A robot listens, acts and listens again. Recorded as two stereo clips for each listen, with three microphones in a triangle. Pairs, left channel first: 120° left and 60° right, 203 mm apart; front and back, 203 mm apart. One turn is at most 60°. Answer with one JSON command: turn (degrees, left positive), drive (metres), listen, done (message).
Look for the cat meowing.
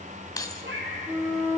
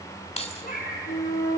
{"turn": -45}
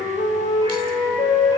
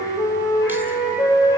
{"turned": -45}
{"listen": true}
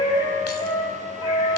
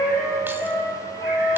{"listen": true}
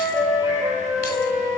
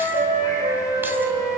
{"done": "I heard a cat meowing from this way, but can't make it out now."}